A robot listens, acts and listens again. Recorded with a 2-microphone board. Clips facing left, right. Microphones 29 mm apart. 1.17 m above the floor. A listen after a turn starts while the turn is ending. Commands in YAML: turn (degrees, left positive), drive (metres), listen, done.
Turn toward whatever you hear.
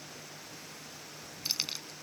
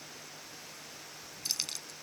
turn: 20
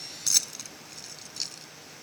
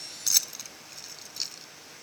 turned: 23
done: "Facing the keys jangling."